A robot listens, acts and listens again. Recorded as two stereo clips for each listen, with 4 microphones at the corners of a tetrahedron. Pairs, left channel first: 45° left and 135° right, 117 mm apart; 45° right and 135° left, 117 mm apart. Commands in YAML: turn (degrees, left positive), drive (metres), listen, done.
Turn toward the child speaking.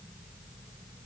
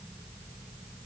listen: true
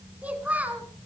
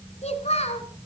turn: -60
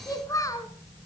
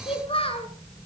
turn: -15
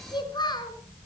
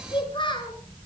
done: "Found it: a child speaking, straight ahead, 2 to 4 m away."